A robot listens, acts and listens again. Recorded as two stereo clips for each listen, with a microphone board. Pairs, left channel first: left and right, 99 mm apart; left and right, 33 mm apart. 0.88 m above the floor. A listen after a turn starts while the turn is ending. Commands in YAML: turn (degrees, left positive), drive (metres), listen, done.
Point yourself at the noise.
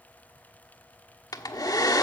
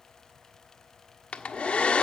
turn: 40
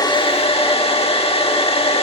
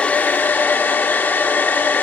turn: 100
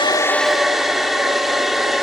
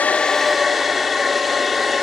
done: "Facing the hair dryer, 1 to 2 m away."